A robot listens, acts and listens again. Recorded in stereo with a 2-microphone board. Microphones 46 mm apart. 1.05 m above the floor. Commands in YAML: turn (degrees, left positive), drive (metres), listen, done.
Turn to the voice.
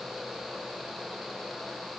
listen: true
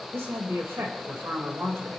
turn: -90
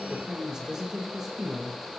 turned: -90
turn: -15
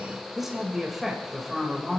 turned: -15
done: "Facing the woman speaking, over 4 m away."